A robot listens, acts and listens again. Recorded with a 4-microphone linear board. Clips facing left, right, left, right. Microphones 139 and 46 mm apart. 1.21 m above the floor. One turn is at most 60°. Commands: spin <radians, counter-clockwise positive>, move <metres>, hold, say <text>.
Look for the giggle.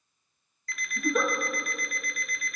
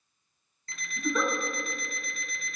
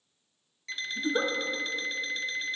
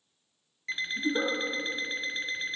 spin 0.35
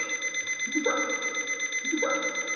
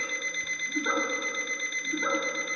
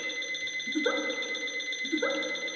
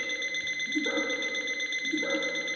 spin 1.05
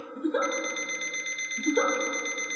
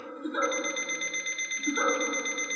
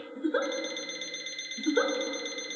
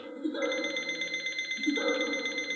spin 1.05
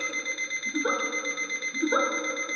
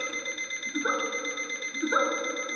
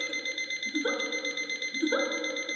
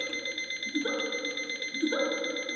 spin 0.44
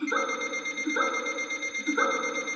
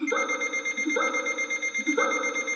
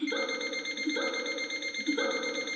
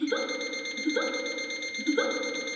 spin -0.35
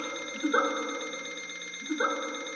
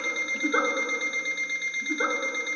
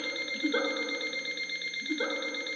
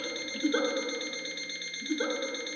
say Facing the giggle, 1 to 2 m away.